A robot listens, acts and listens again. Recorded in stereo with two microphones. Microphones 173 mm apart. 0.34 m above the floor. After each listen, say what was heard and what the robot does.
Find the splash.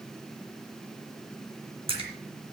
The splash: about 30° right or 150° right. Turn 30° right.
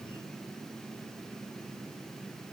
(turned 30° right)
Keep listening.
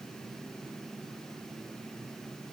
I heard a splash, but can't make it out now. It was about straight ahead or 120° right.